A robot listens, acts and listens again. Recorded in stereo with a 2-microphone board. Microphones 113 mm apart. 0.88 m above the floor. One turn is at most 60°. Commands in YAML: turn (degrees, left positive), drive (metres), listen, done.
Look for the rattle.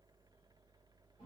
listen: true
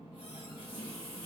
listen: true
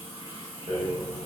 turn: -60
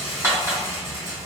turn: -25
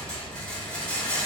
done: "Found it: a rattle, straight ahead."